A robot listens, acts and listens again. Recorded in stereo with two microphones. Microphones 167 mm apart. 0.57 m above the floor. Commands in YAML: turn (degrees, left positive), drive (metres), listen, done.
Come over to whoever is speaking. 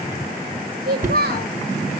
turn: -70
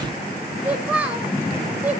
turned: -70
turn: -10
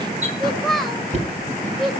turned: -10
drive: 1.0
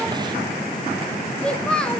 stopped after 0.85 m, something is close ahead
done: "Arrived at the child speaking, straight ahead."